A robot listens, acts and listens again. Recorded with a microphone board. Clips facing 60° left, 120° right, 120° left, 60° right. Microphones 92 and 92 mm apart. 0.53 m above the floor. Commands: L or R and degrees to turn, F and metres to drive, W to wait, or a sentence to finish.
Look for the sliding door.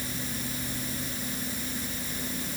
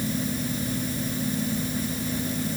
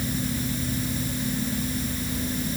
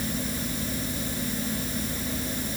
W
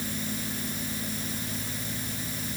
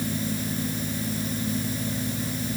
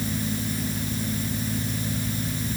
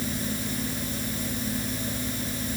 W
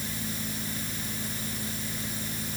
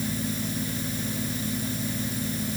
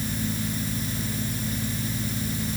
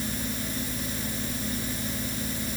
I can't make out a sliding door to turn to.